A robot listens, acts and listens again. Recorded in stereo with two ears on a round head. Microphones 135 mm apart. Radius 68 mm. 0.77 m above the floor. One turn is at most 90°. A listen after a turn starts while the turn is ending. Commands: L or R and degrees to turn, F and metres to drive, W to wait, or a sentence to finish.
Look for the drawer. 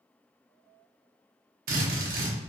W
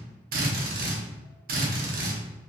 W
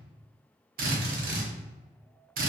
I can't make out a drawer, only a drill.